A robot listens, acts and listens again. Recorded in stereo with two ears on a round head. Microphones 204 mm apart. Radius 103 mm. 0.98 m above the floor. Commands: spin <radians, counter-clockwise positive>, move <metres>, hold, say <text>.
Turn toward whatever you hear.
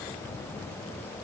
hold
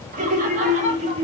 spin -0.44
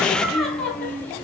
spin 0.17
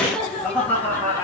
spin 0.17
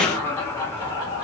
spin 0.26
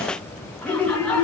say Found it: laughter, straight ahead.